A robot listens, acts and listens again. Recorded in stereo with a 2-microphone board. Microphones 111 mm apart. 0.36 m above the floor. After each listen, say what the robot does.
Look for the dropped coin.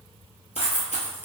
Turn 90° left.
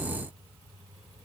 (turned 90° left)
Facing where the dropped coin came from. I can't hear it now.